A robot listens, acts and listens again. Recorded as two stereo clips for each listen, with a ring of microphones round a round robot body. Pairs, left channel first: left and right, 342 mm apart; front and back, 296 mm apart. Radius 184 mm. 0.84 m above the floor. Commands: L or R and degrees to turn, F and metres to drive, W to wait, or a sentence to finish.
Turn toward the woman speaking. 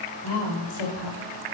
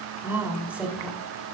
L95
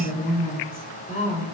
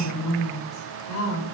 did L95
L20
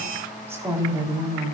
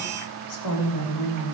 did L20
R15
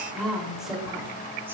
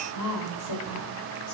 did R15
Facing the woman speaking.